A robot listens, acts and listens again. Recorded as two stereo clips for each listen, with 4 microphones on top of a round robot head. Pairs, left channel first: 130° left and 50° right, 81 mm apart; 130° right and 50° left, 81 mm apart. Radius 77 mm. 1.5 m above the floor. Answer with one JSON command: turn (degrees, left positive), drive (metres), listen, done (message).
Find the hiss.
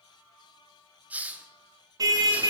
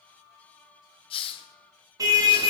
{"turn": -120}
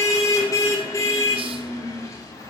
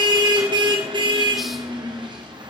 {"listen": true}
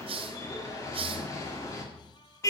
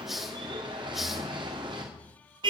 {"turn": -40}
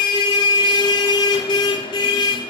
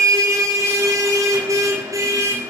{"listen": true}
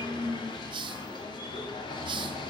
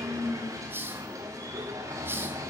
{"turn": -20}
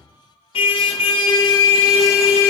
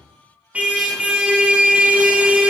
{"listen": true}
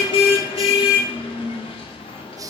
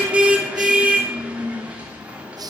{"done": "Found it: a hiss, straight ahead, 1 to 2 m away."}